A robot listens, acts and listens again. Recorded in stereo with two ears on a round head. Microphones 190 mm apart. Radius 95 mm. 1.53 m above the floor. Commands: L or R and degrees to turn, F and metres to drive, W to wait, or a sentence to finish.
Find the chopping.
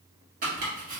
R40
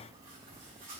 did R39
W
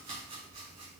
W
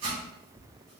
R105
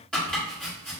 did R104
Found it: chopping, straight ahead.